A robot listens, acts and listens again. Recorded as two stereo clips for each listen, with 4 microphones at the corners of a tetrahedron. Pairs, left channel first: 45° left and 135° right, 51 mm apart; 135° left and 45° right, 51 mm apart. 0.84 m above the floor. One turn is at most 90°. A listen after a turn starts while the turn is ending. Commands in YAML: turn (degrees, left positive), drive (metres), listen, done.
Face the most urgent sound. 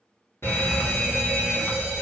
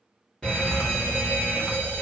turn: 65
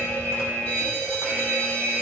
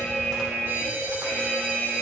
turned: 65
done: "Facing the fire alarm, 2 to 4 m away."